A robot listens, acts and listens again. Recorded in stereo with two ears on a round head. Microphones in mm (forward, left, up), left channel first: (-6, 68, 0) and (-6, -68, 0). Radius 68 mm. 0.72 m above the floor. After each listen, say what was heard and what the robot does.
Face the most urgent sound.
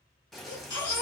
The baby crying: about 25° left or 155° left. Turn 25° left.
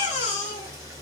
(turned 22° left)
So it is at 130° left. Turn 130° left.
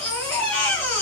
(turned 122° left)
The baby crying is now 10° left. Turn 10° left.
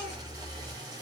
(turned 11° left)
Found it: a baby crying, straight ahead.